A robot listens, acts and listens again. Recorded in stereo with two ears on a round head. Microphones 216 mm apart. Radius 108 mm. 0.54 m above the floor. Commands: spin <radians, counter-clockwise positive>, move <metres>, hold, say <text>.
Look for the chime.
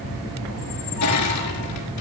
hold
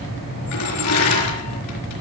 hold
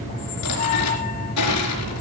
say I can't make out a chime, only a squeak and crushing.